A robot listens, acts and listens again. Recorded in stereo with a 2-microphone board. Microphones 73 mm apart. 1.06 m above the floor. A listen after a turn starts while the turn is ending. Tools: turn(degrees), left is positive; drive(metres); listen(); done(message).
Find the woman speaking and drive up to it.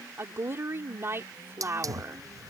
turn(degrees=-35)
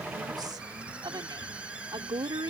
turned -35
turn(degrees=-110)
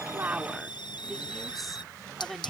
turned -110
drive(metres=1.0)
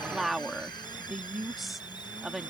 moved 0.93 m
drive(metres=1.0)
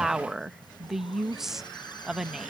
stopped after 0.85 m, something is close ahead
done("Arrived at the woman speaking, straight ahead.")